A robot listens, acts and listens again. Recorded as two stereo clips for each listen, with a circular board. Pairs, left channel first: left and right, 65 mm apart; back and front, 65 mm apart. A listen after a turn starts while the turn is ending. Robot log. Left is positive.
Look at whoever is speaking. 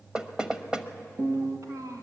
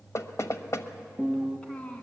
note: The child speaking: 105° right.
cmd yaw -105
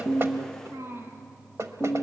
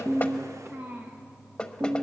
note: The child speaking is now 50° right.
cmd yaw -50
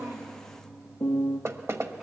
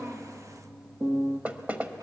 cmd idle
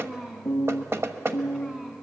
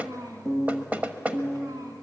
end: Found it: a child speaking, straight ahead.